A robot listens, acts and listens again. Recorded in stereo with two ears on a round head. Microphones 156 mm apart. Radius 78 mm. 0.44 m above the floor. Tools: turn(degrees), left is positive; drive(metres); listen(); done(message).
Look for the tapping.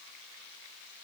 listen()
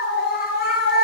listen()
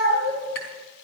turn(degrees=90)
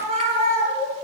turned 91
listen()
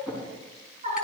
done("Facing the tapping, over 4 m away.")